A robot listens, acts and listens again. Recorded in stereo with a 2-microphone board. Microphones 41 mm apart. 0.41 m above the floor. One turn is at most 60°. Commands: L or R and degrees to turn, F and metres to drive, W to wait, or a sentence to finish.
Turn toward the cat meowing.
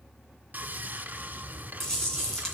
W
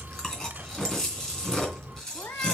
L60
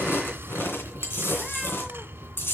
W
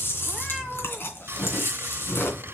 L15
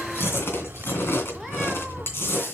Found it: a cat meowing, straight ahead, 1 to 2 m away.